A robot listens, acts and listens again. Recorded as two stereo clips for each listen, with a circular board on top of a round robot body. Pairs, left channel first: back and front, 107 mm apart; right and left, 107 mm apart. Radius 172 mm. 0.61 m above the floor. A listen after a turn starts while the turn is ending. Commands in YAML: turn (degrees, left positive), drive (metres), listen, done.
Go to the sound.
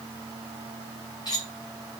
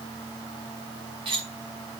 turn: 130
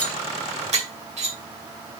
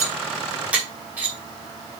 turn: 15
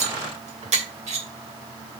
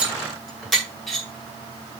drive: 1.0
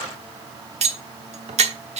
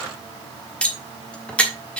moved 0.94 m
turn: -10
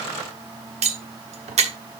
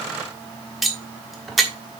drive: 1.0
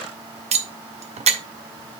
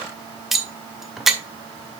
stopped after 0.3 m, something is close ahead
done: "I am next to the cutlery clinking."